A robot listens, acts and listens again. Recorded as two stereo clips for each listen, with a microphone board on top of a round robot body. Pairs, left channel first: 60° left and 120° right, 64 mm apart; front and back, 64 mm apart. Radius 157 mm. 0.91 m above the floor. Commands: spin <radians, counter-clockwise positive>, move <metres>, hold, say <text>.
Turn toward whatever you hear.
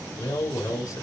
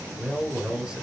spin 1.66
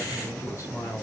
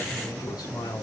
spin 0.26
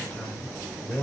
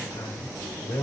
say Found it: a man speaking, straight ahead.